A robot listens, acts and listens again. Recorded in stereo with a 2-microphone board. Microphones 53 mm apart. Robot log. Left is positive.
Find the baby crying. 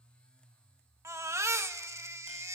note: The baby crying: about 70° right or 110° right.
cmd yaw -70
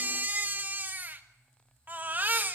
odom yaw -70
note: So it is at 35° right.
cmd yaw -35
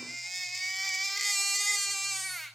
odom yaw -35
end: Found it: a baby crying, straight ahead.